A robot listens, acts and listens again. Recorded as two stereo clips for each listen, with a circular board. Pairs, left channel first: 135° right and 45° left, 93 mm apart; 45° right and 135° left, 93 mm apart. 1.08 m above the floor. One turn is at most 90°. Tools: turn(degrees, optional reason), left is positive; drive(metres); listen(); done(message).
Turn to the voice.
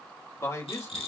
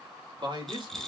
turn(degrees=90, reason="The man speaking: 170° left.")
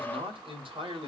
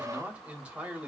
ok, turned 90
turn(degrees=60, reason="The man speaking is now 60° left.")
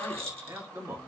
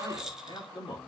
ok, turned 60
turn(degrees=-10, reason="The man speaking is now 10° right.")
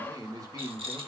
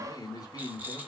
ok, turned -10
done("Facing the man speaking, 2 to 4 m away.")